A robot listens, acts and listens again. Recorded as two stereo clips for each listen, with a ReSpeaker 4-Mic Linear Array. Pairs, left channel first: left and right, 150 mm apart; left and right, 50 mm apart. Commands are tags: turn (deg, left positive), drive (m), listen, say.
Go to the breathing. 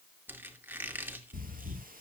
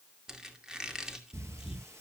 <turn deg="-70"/>
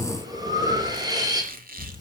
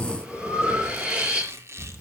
<turn deg="-25"/>
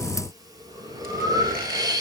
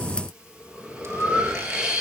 <turn deg="-25"/>
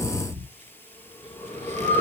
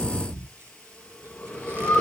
<turn deg="15"/>
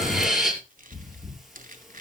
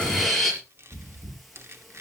<drive m="1.0"/>
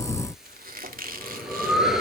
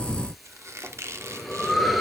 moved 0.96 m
<drive m="1.0"/>
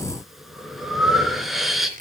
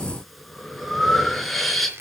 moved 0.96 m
<drive m="1.0"/>
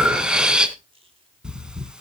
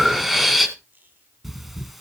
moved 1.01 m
<drive m="1.0"/>
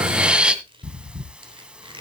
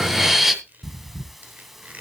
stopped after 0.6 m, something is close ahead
<turn deg="-10"/>
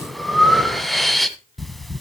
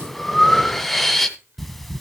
<say>Arrived at the breathing, straight ahead.</say>